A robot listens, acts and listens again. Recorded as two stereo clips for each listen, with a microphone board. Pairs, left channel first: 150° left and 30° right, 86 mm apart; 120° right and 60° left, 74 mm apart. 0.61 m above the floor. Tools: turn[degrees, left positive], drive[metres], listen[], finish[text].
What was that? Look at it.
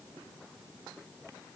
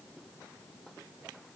Action: listen[]
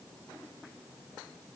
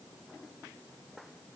Action: listen[]
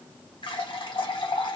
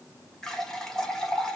Thought: The running tap: 160° left.
Action: turn[160]
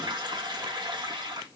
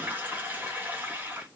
Action: finish[Found it: a running tap, straight ahead, 1 to 2 m away.]